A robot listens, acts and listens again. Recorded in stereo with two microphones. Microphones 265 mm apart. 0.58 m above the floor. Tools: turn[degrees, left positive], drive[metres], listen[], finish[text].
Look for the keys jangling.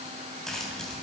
Action: turn[30]
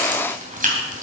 Thought: So it is at 30° right.
Action: turn[-30]
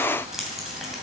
Action: finish[Found it: keys jangling, straight ahead, 2 to 4 m away.]